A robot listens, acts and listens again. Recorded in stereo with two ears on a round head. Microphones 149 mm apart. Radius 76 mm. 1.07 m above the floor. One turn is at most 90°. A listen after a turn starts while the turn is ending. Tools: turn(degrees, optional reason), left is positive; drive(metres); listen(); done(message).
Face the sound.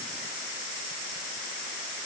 listen()
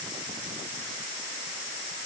listen()
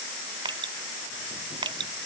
turn(degrees=-25, reason="The dripping: about 25° right or 155° right.")
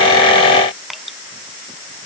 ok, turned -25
done("Facing the dripping.")